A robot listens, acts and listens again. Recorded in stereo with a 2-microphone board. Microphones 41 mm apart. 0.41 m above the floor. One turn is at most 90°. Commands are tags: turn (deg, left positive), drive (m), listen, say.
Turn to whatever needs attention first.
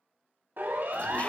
<turn deg="-60"/>
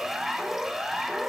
<turn deg="-10"/>
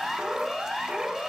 <say>Found it: a siren, straight ahead, over 4 m away.</say>